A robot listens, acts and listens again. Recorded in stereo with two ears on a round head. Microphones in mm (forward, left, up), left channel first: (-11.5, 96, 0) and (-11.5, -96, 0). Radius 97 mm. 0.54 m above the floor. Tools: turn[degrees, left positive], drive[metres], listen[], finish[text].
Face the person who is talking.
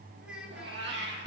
Action: turn[-30]
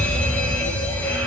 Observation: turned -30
Action: listen[]
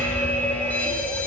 Action: listen[]
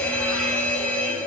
Action: finish[I heard a child speaking, but can't make it out now. It was about 25° left or 145° right.]